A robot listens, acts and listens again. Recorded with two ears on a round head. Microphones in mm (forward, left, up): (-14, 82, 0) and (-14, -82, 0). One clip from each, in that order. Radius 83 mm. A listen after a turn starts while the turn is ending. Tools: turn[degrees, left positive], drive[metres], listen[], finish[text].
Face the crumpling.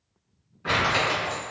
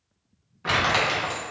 Thought: The crumpling: about 25° right or 155° right.
Action: turn[-25]
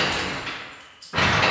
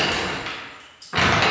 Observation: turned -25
Thought: So it is at 130° right.
Action: turn[-130]
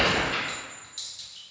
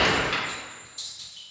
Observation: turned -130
Action: listen[]
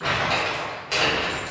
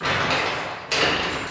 Thought: The crumpling is now 10° right.
Action: turn[-10]
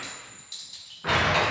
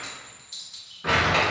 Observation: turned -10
Action: finish[Found it: crumpling, straight ahead, under 1 m away.]